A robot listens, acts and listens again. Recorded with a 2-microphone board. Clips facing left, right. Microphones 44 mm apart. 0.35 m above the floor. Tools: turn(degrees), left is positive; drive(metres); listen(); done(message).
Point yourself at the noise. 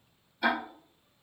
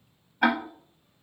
turn(degrees=-55)
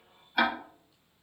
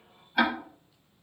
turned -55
done("Facing the ticking, under 1 m away.")